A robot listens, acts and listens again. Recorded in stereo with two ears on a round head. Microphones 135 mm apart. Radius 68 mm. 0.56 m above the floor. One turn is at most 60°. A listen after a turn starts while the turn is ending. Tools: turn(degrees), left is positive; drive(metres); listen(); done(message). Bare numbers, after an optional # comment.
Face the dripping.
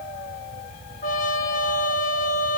listen()
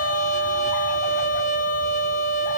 listen()
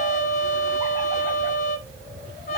done("I can't make out dripping to turn to.")